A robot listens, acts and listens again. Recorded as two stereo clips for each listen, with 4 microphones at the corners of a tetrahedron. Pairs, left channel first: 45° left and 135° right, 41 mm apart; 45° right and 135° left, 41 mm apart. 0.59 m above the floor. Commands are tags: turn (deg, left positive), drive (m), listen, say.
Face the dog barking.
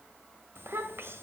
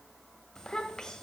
<listen/>
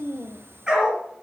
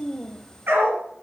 <turn deg="155"/>
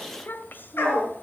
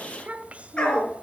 <turn deg="20"/>
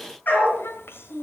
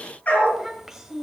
<say>Facing the dog barking.</say>